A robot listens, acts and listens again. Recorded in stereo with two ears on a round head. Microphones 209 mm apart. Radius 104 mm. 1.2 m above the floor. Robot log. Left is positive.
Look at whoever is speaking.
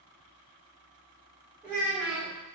cmd yaw -30
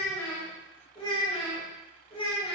note: So it is at 25° left.
cmd yaw +25
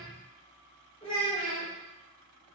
note: The child speaking is now 20° left.
cmd yaw +20
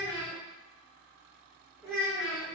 end: Found it: a child speaking, straight ahead.